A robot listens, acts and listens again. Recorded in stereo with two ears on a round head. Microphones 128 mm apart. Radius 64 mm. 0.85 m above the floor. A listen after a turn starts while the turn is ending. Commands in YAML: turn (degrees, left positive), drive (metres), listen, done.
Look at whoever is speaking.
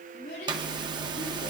turn: 75
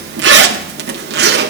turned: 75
listen: true
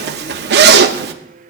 listen: true
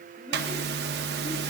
done: "I heard a child speaking, but can't make it out now. It was about straight ahead or 30° left."